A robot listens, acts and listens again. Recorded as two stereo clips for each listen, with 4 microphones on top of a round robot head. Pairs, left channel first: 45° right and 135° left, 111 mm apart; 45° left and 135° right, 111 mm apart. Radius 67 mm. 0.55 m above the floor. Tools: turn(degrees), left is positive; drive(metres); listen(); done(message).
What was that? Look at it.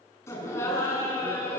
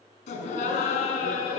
turn(degrees=20)
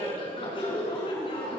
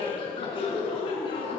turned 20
done("Facing the laughter, over 4 m away.")